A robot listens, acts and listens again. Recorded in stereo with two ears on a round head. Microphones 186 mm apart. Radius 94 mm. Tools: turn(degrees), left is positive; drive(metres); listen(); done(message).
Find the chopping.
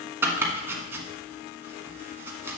turn(degrees=-30)
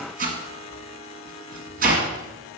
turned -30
turn(degrees=-135)
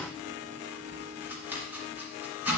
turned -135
turn(degrees=-10)
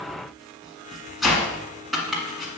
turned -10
done("Found it: chopping, straight ahead.")